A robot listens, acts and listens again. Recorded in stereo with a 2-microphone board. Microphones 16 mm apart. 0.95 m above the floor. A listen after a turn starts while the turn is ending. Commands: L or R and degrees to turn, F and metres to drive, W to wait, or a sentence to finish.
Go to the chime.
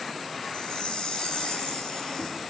L60
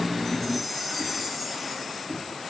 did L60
F1.0
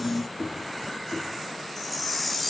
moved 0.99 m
L10
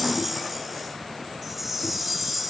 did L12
F1.0
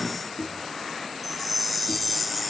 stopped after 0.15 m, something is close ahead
Arrived at the chime, straight ahead.